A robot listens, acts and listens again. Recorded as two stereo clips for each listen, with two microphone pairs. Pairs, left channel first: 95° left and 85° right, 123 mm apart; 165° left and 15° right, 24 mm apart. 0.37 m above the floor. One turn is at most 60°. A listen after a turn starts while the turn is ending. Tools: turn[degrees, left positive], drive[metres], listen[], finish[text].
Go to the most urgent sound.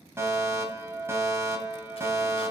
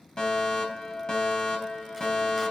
Thought: The fire alarm: 150° right.
Action: turn[-60]
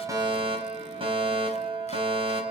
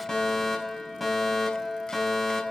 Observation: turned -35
Thought: The fire alarm is now 115° right.
Action: turn[-60]
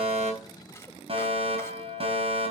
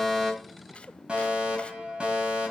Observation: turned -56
Thought: The fire alarm is now 60° right.
Action: turn[-60]
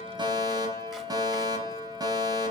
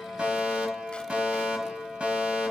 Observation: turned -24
Thought: The fire alarm is now 35° right.
Action: turn[-35]
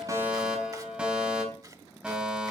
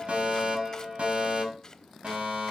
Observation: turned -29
Action: drive[1.0]
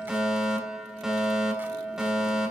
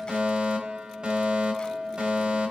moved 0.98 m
Action: drive[1.0]
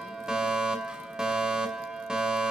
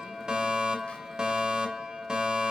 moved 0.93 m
Action: drive[1.0]
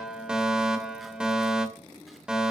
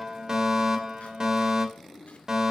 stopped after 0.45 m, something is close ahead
Thought: The fire alarm is now 10° right.
Action: turn[-10]
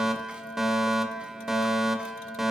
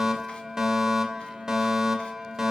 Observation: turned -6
Action: finish[Arrived at the fire alarm, straight ahead.]